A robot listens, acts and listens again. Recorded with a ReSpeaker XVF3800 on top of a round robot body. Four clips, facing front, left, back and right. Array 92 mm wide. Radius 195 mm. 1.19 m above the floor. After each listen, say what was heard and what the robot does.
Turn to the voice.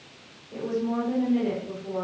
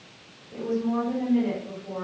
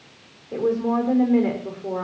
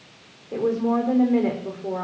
The woman speaking: 140° right. Turn 140° right.
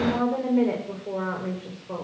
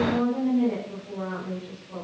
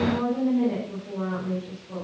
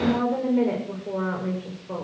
The woman speaking is now 45° right. Turn 45° right.
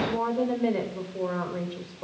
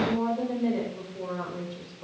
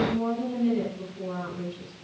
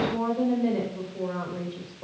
Found it: a woman speaking, straight ahead.